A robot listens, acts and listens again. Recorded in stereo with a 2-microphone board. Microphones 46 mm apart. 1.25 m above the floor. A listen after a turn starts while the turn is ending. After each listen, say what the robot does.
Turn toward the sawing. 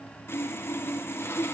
Turn 60° left.
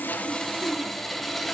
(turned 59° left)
Found it: sawing, straight ahead, under 1 m away.